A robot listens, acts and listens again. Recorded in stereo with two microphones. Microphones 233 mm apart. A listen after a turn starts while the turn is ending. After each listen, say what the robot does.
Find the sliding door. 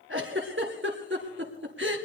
Keep listening.
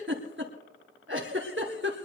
Keep listening.
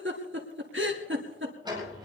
Turn 20° right.
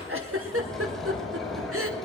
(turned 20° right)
Found it: a sliding door, straight ahead.